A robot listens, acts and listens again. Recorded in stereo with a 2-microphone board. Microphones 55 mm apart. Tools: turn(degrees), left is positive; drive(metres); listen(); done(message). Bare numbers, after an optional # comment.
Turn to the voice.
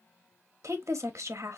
# The woman speaking: about 65° right or 115° right.
turn(-65)
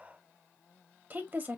# So it is at 40° right.
turn(-40)
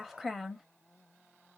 done("Found it: a woman speaking, straight ahead, under 1 m away.")